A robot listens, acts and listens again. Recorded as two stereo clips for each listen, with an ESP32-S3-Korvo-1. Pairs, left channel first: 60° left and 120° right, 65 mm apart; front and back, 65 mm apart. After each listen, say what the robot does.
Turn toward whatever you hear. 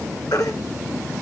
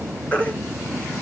Turn 65° left.
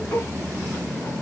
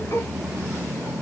Keep listening.
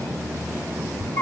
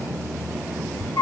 Found it: a baby crying, straight ahead.